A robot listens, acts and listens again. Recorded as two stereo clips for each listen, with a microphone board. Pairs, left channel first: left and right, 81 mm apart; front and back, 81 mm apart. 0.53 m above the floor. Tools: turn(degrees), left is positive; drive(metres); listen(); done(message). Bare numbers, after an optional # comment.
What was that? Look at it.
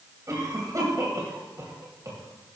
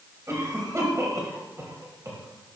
# The cough: 135° right.
turn(-135)
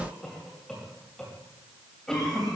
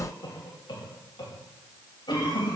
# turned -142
# The cough is now 10° left.
turn(10)
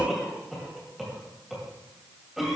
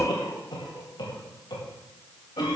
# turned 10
done("Found it: a cough, straight ahead, 2 to 4 m away.")